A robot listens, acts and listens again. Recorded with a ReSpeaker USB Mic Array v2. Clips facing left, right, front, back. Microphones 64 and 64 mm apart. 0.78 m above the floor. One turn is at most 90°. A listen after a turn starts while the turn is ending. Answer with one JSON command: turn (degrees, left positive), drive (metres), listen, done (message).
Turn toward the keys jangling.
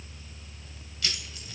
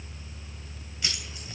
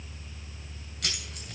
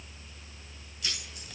{"turn": -20}
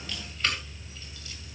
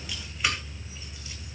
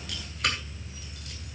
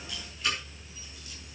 {"turn": -10}
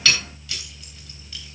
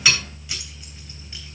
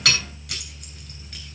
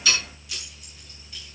{"turn": -20}
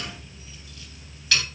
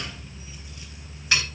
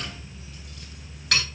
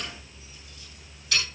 {"turn": -20}
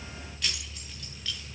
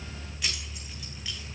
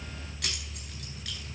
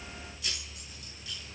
{"turn": -10}
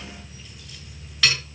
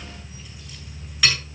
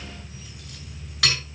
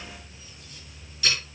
{"done": "Facing the keys jangling."}